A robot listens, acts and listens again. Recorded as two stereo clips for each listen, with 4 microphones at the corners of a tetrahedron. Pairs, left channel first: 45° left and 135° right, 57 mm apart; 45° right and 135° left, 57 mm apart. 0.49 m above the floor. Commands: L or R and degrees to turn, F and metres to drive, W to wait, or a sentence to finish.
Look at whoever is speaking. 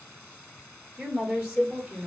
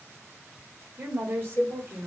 L170
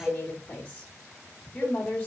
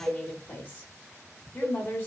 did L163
L10
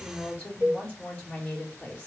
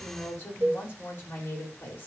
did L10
Found it: a woman speaking, straight ahead.